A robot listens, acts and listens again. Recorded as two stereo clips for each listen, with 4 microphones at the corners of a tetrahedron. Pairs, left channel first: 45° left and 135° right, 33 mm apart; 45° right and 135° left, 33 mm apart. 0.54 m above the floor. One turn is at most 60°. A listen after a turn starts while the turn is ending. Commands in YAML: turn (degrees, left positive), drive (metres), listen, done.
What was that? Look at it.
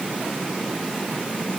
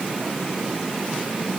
listen: true
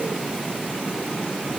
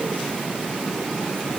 listen: true
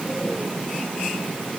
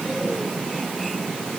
done: "I can't make out anything."